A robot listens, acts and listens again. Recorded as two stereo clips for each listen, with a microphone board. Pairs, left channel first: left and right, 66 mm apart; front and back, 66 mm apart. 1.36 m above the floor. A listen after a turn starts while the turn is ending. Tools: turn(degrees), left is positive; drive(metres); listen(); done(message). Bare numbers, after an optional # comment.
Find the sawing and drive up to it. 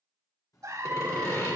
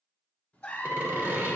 # The sawing: 125° left.
turn(125)
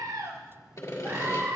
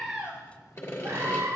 # The sawing is now 45° left.
turn(45)
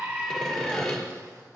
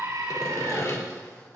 # The sawing is now 10° left.
turn(10)
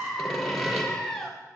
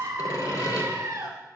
drive(1.0)
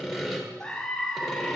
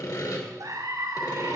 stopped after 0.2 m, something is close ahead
done("Something is in my way. I am facing the sawing but have not reached it.")